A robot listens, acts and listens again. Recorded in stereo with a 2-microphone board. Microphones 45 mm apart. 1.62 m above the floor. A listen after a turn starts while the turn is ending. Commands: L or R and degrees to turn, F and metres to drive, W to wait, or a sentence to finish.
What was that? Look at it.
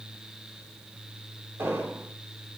R90
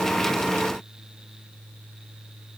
I heard an explosion from this way, but can't make it out now.